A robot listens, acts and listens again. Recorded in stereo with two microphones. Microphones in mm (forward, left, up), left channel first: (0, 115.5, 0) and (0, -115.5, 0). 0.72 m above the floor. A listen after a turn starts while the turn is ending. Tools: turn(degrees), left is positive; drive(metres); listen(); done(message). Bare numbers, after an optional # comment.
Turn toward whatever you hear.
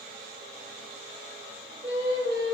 # The singing: about 40° right or 140° right.
turn(-40)
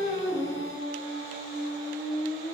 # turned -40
# The singing: about 30° right or 150° right.
turn(-30)
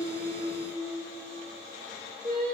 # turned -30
# The singing: about 40° right or 140° right.
turn(-40)
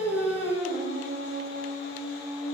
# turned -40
# So it is at 110° right.
turn(-110)
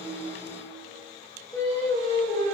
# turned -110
# The singing is now 15° left.
turn(15)
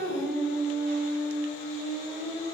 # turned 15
done("Found it: singing, straight ahead, 2 to 4 m away.")